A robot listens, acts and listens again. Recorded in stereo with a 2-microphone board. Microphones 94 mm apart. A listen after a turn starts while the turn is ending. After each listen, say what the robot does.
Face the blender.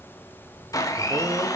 Turn 35° left.
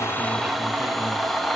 Found it: a blender, straight ahead, under 1 m away.